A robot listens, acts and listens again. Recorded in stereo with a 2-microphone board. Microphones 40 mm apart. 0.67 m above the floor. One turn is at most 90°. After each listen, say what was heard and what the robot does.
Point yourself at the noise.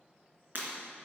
The breaking glass: about 55° right or 125° right. Turn 55° right.
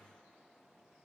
Keep listening.
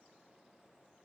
I heard breaking glass, but can't make it out now. It was about straight ahead or 70° right.